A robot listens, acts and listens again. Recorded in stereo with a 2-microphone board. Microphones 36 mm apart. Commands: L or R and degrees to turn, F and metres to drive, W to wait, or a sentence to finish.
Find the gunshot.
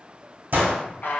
R70
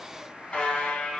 W
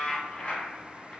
I heard a gunshot, but can't make it out now. It was about straight ahead or 40° right.